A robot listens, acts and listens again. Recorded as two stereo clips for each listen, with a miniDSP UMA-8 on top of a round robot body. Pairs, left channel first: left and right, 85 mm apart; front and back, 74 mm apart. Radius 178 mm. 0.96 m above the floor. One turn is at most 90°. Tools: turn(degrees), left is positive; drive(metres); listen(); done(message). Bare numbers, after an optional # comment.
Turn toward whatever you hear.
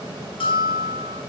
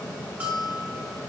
# The bell: 110° left.
turn(90)
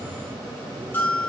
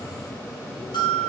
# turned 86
# The bell is now 20° left.
turn(20)
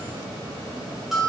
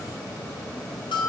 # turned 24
done("Found it: a bell, straight ahead.")